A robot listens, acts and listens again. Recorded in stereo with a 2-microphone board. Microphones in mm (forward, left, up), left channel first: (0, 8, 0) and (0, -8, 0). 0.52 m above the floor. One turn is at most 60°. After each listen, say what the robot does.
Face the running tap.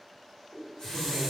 Turn 55° left.
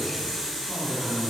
Turn 20° left.
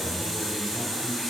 Facing the running tap.